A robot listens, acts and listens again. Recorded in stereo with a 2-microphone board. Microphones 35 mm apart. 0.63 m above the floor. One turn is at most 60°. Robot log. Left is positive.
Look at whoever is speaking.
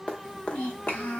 cmd yaw +60
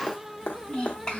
note: So it is at 20° left.
cmd yaw +20
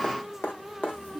note: The child speaking is now 10° left.
cmd yaw +10
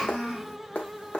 end: Found it: a child speaking, straight ahead, 1 to 2 m away.